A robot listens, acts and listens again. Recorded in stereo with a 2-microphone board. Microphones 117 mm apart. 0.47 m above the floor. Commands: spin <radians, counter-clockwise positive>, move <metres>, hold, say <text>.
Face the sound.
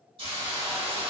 spin -0.79
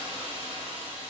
spin -1.31
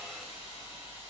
spin -0.35
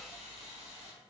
say Found it: a hiss, straight ahead.